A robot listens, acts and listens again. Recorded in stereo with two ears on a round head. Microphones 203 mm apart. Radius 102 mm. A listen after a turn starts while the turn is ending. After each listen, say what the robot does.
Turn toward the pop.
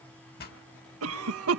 Turn 45° left.
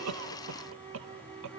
Keep listening.
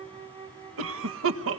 I heard a pop, but can't make it out now. It was about straight ahead or 90° left.